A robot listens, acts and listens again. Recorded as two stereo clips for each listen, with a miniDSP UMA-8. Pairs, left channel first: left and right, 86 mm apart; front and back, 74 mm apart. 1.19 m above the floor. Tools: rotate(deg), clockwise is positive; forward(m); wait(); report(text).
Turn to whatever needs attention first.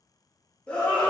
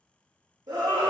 rotate(-165)
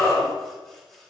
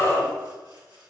rotate(-40)
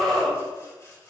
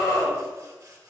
rotate(-10)
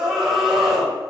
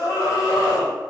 report("Facing the scream, 2 to 4 m away.")